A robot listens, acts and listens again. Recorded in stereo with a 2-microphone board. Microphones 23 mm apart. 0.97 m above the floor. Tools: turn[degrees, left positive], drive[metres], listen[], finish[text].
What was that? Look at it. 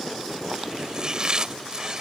Thought: The chopping: about 30° right or 150° right.
Action: turn[-30]
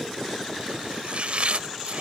Thought: So it is at 120° right.
Action: turn[-120]
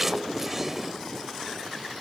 Thought: The chopping is now 15° right.
Action: turn[-15]
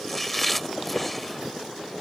Action: finish[Facing the chopping.]